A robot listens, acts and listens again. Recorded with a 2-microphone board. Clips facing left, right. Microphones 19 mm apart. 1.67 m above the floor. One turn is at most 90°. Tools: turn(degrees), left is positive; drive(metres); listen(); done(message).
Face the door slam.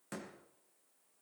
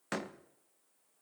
turn(degrees=-55)
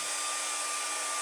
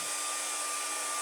listen()
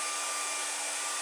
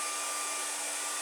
done("I heard a door slam, but can't make it out now. It was about straight ahead or 70° right.")